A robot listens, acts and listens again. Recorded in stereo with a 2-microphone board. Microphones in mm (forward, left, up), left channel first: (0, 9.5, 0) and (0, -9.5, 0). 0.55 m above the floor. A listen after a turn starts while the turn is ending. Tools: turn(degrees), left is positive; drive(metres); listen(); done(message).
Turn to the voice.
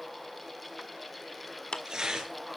listen()
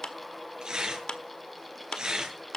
listen()
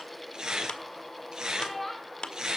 turn(degrees=30)
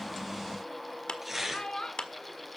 turn(degrees=135)
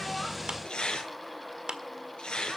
listen()
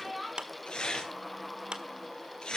done("Found it: a child speaking, straight ahead.")